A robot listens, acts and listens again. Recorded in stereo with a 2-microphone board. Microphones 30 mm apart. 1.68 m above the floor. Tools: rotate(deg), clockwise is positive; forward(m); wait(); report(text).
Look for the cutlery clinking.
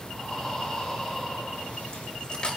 rotate(-35)
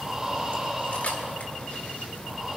wait()
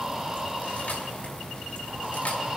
wait()
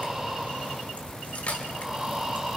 rotate(-105)
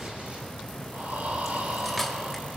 wait()
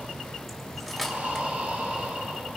report("Facing the cutlery clinking, 1 to 2 m away.")